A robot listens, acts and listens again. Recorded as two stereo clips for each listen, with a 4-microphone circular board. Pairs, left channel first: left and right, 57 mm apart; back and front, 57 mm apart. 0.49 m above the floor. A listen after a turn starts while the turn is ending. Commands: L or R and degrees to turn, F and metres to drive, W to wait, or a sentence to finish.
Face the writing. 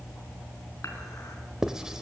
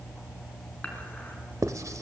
R10
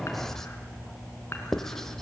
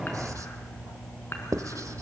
Facing the writing.